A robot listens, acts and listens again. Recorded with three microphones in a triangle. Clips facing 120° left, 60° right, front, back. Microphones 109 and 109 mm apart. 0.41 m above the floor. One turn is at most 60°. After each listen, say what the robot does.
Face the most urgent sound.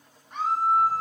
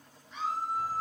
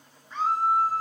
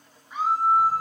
Turn 60° left.
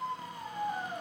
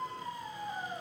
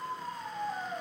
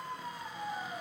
Turn 45° left.
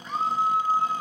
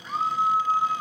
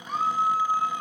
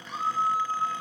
Turn 25° left.
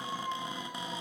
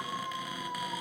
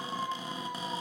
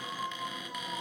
Turn 10° left.
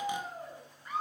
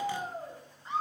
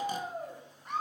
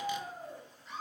Facing the scream.